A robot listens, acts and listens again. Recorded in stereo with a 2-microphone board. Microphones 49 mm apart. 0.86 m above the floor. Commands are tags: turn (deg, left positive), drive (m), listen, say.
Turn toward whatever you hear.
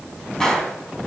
<turn deg="30"/>
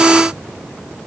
<listen/>
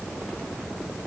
<say>I heard a gunshot, but can't make it out now. It was about 20° right or 140° left.</say>